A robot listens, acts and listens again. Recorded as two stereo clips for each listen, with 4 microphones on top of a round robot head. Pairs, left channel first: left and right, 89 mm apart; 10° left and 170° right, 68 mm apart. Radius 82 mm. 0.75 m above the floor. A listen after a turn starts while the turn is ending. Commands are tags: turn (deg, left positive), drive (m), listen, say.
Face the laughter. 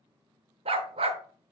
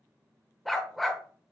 <listen/>
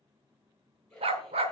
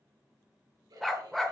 <turn deg="175"/>
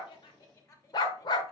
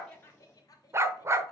<turn deg="40"/>
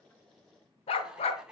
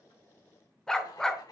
<turn deg="-10"/>
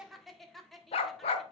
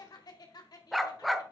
<say>Found it: laughter, straight ahead.</say>